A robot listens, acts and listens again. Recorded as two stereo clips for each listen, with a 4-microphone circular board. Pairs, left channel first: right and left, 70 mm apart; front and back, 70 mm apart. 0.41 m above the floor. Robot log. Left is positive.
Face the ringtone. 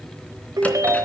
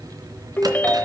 note: The ringtone: 65° left.
cmd yaw +65
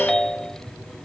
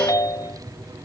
end: Facing the ringtone.